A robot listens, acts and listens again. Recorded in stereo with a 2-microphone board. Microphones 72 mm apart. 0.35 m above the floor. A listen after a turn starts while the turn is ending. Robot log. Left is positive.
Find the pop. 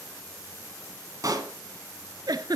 note: The pop: about 55° right or 125° right.
cmd yaw -55
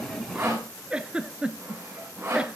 cmd idle
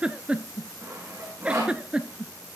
end: I heard a pop, but can't make it out now. It was about straight ahead or 70° right.